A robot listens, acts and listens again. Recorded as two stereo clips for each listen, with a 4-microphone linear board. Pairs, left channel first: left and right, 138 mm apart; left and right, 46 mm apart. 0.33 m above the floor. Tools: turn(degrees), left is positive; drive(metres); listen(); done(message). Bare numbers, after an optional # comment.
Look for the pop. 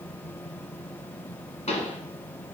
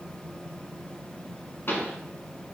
# The pop: about 55° left or 125° left.
turn(55)
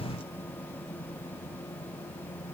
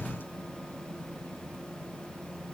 listen()
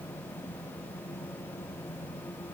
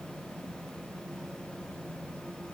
done("I heard a pop, but can't make it out now. It was about straight ahead or 70° left.")